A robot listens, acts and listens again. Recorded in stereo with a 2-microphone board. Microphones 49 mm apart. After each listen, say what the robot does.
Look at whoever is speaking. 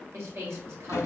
Turn 55° right.
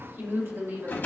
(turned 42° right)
Turn 75° right.
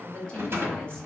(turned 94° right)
Turn 20° left.
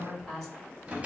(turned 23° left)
Found it: a woman speaking, straight ahead.